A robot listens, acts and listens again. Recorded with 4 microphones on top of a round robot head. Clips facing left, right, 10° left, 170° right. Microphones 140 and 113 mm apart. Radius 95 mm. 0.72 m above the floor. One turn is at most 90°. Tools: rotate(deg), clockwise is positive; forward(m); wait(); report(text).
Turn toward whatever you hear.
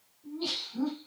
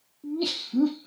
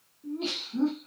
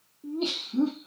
rotate(90)
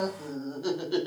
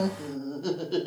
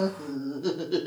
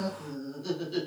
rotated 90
report("Found it: laughter, straight ahead, 1 to 2 m away.")